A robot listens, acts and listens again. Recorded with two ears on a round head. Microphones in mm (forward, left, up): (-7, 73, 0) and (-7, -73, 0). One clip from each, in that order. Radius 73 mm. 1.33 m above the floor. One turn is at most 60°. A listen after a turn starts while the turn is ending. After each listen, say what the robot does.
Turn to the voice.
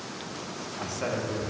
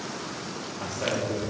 Turn 30° left.
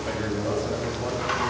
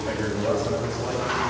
Found it: a man speaking, straight ahead, 1 to 2 m away.